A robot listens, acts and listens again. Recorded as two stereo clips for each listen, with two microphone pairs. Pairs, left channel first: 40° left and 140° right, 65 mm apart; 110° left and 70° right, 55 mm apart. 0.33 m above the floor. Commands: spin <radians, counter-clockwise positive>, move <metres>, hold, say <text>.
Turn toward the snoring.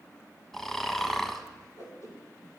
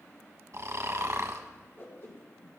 spin -0.79
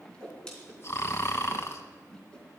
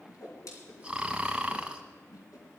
say Found it: snoring, straight ahead.